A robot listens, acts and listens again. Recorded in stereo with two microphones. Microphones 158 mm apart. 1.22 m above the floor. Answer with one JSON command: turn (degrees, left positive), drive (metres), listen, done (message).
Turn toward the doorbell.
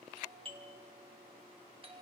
{"turn": -35}
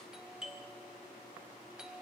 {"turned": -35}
{"done": "Facing the doorbell, 1 to 2 m away."}